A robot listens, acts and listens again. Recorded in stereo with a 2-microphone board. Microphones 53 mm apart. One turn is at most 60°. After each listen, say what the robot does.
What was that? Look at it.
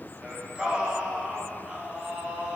Turn 20° right.
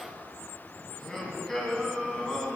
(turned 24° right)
Facing the singing.